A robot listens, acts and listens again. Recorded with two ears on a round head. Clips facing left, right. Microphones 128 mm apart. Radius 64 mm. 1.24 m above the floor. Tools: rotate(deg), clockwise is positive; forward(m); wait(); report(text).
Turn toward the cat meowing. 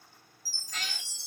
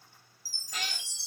rotate(30)
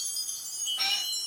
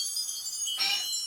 report("Facing the cat meowing.")